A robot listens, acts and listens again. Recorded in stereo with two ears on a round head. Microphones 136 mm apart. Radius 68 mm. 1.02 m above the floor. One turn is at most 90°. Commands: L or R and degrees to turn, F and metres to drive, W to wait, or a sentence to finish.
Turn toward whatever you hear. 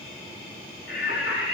L90
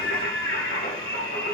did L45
L70
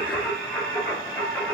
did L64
L15
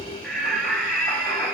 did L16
Facing the singing.